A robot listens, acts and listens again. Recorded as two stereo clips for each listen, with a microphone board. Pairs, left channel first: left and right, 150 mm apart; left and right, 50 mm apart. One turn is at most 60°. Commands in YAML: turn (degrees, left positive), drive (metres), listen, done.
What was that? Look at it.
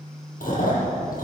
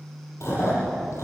turn: 60
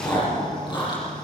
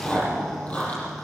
turn: 30
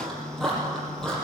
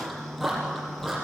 done: "Found it: chewing, straight ahead, over 4 m away."